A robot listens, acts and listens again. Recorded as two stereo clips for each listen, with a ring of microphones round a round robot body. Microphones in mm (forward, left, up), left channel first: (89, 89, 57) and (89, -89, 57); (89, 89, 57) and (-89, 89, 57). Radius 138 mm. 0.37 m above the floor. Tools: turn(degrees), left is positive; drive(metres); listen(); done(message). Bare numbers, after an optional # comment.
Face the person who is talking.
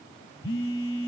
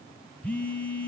listen()
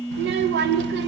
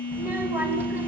# The child speaking: 100° right.
turn(-100)
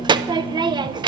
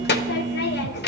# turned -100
# The child speaking is now 25° right.
turn(-25)
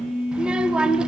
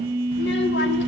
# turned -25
done("Facing the child speaking, under 1 m away.")